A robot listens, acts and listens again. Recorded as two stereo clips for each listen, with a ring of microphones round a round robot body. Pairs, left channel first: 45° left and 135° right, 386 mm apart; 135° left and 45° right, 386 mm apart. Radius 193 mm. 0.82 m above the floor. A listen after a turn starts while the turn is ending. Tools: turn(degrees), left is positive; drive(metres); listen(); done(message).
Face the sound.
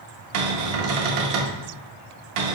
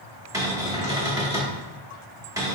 turn(degrees=-125)
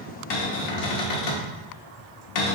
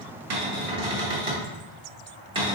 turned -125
turn(degrees=35)
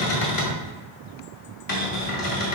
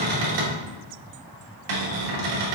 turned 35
done("Facing the cupboard door, 1 to 2 m away.")